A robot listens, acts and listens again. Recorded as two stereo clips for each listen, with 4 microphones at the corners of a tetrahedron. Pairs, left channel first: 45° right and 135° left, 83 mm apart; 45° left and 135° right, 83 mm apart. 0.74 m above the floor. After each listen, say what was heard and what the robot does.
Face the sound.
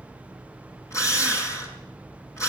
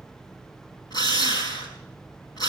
The drill: 15° left. Turn 15° left.
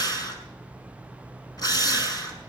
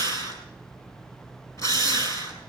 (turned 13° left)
Facing the drill, over 4 m away.